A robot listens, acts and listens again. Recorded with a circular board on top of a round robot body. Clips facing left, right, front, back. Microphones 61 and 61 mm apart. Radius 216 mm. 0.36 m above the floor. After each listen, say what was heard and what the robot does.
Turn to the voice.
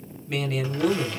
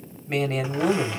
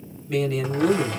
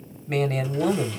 The man speaking: 150° right. Turn 150° right.
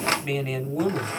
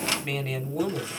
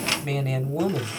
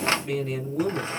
Found it: a man speaking, straight ahead, 2 to 4 m away.